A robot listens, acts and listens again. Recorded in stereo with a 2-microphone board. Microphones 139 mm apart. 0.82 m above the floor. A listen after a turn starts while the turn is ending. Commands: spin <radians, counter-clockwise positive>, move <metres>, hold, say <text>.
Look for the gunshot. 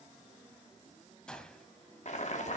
spin 0.52
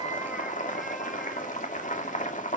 hold
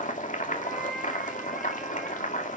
say I heard a gunshot, but can't make it out now. It was about 25° right or 145° left.